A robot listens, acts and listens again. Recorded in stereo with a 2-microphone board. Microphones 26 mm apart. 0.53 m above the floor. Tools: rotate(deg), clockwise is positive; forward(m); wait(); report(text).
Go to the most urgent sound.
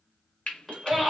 rotate(-30)
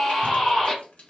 rotate(-150)
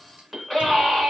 rotate(10)
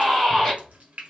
forward(1.0)
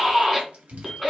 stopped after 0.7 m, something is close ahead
report("Arrived at the scream, straight ahead.")